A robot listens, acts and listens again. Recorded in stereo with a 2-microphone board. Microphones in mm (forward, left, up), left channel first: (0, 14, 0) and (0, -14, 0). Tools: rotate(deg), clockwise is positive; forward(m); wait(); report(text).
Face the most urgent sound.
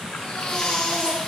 rotate(-25)
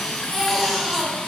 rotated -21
report("Facing the baby crying, 2 to 4 m away.")